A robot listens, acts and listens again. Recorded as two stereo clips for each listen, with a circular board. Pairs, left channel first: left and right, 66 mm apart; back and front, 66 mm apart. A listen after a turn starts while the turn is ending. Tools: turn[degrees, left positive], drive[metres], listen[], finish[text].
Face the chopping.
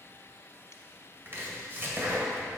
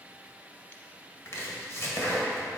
Thought: The chopping: 140° right.
Action: turn[-140]
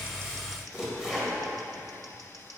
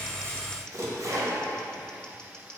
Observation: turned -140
Thought: The chopping is now 10° right.
Action: turn[-10]
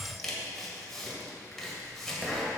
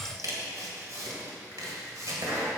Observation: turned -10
Action: finish[Facing the chopping.]